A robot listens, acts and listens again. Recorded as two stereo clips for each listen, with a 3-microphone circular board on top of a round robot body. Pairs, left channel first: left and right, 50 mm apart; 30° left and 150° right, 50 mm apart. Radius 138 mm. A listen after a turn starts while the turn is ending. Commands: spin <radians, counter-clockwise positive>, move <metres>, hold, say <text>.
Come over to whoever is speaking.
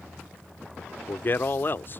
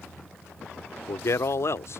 spin 0.87
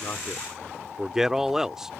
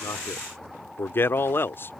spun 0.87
spin -0.17
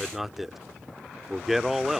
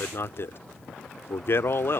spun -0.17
move 1.0
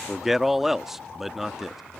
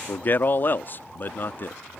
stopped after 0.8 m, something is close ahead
say Arrived at the man speaking, straight ahead.